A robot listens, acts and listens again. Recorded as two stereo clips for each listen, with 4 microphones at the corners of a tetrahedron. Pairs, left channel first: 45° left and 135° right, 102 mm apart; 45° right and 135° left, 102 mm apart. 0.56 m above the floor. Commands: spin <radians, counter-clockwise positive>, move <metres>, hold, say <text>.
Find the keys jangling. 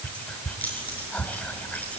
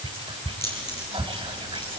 spin -0.52
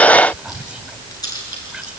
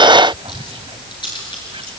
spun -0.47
say Found it: keys jangling, straight ahead.